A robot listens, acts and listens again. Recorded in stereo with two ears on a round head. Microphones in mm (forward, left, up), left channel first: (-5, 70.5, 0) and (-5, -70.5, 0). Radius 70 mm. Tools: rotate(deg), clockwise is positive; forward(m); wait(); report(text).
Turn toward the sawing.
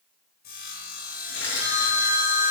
rotate(-65)
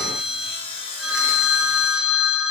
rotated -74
rotate(-40)
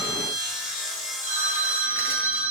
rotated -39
report("Found it: sawing, straight ahead.")